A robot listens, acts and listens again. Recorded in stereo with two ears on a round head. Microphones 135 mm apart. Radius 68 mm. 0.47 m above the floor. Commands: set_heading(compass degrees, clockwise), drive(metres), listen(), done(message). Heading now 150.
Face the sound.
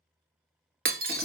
set_heading(220)
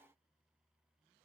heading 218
listen()
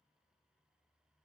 done("I heard breaking glass, but can't make it out now. It was about 5° right or 40° right.")